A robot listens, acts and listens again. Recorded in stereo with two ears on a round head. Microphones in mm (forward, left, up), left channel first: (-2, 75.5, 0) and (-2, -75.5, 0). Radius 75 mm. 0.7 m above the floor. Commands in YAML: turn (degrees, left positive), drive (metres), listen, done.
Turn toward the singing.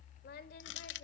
turn: 60
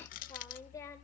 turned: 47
turn: 20
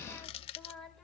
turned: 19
done: "Facing the singing."